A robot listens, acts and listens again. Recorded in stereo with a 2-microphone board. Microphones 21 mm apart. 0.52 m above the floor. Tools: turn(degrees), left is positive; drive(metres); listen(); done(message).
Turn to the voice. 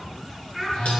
turn(degrees=-30)
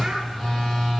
listen()
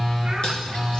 listen()
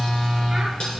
done("I heard a child speaking, but can't make it out now. It was about 25° left or 145° right.")